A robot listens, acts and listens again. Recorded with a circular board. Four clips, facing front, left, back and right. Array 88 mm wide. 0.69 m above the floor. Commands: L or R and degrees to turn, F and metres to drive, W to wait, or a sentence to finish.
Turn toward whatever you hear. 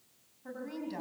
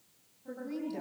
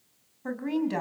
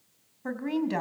R125
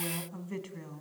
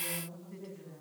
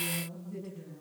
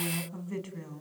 R40
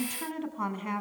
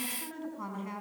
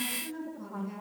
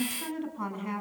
R20
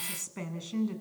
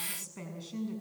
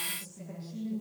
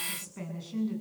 Found it: a woman speaking, straight ahead, over 4 m away.